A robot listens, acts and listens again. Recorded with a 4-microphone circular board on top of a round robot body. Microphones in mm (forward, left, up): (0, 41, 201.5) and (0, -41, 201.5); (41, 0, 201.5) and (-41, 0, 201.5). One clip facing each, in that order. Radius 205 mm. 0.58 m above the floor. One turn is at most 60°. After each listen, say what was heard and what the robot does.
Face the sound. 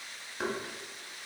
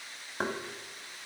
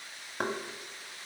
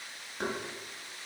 The knocking: 45° right. Turn 45° right.
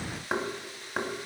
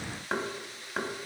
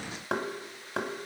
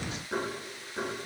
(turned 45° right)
Facing the knocking.